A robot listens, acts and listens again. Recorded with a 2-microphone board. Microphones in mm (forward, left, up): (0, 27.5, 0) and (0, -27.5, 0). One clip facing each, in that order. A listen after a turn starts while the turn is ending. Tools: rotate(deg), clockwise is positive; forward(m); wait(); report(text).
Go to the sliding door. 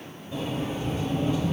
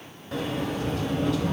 rotate(70)
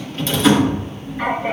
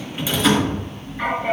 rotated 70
forward(1.0)
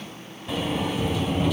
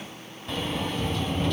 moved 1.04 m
forward(1.0)
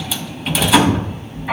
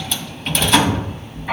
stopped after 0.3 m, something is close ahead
report("I am next to the sliding door.")